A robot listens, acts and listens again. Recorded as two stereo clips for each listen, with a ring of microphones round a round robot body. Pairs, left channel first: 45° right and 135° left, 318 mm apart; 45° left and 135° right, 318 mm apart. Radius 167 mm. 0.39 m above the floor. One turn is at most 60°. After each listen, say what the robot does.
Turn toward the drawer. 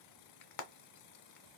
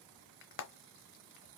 Keep listening.
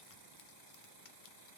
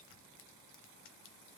Keep listening.
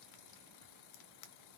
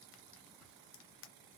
I can't make out a drawer, only frying.